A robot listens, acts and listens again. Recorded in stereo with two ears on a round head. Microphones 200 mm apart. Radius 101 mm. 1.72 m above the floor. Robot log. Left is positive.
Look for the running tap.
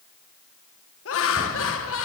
cmd idle
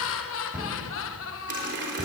note: The running tap: about 55° right or 125° right.
cmd yaw -55
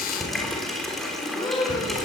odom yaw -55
end: Found it: a running tap, straight ahead.